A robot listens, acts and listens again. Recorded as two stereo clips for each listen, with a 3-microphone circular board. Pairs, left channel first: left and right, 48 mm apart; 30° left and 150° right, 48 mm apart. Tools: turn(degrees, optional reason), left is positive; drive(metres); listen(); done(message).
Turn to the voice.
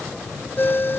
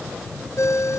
listen()
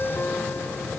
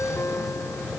listen()
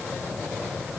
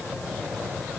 done("I can't make out anyone speaking, only a ringtone.")